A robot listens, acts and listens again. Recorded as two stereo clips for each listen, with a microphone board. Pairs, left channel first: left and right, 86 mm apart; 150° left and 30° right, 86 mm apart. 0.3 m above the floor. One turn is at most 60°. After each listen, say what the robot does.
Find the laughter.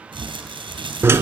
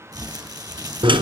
Keep listening.
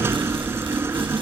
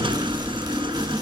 Keep listening.
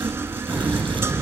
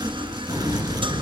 Turn 20° left.
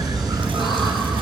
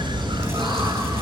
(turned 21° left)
Facing the laughter.